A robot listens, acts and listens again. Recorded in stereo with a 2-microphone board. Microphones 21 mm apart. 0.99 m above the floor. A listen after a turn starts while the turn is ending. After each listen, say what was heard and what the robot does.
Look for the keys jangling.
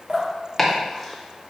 Keep listening.
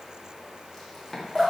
Keep listening.
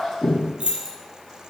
The keys jangling: about 60° right or 120° right. Turn 60° right.
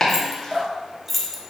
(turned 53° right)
So it is at 15° left. Turn 15° left.
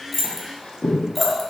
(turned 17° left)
Keep listening.
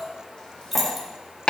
Facing the keys jangling.